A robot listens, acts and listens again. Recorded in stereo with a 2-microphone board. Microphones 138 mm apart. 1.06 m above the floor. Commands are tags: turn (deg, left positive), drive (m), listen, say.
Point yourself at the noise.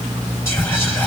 <turn deg="20"/>
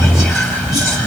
<say>Found it: whispering, straight ahead.</say>